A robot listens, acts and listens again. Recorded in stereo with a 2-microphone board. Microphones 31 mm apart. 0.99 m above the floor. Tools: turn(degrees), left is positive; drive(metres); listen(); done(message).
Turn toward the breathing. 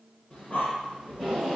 turn(degrees=50)
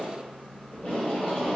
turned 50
turn(degrees=75)
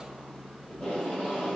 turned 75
turn(degrees=40)
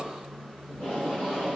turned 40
turn(degrees=20)
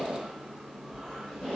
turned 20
done("Found it: breathing, straight ahead, 1 to 2 m away.")